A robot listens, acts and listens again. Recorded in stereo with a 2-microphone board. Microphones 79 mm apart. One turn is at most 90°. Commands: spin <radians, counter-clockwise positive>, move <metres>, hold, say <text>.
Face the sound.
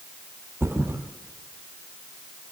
spin -0.61
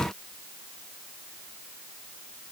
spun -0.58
hold
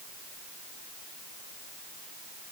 say I heard a thud, but can't make it out now. It was about straight ahead or 115° right.